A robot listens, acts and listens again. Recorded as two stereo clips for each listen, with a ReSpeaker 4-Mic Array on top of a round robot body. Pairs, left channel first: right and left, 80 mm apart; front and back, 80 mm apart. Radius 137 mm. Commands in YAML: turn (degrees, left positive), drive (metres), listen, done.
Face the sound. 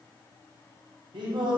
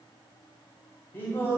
turn: 60
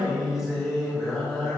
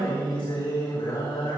done: "Facing the singing."